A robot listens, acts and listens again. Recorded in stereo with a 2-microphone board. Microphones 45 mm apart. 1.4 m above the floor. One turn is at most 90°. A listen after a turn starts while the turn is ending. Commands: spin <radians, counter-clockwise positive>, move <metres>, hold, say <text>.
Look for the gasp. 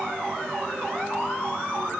hold
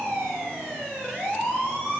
hold
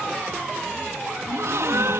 spin -1.57
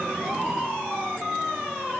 say Facing where the gasp came from. I can't hear it now.